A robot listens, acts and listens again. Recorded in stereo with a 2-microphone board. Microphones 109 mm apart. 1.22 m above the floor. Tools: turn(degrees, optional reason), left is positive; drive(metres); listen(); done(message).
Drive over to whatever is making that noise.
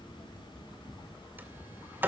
turn(degrees=-20, reason="The sliding door: about 20° right or 160° right.")
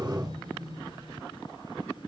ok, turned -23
turn(degrees=-140, reason="So it is at 140° right.")
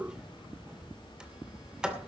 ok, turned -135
drive(metres=1.0)
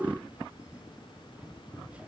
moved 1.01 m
turn(degrees=-10, reason="The sliding door is now 10° right.")
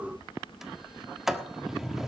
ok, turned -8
drive(metres=1.0)
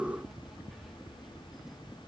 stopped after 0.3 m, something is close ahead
listen()
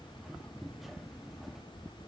done("I am next to the sliding door.")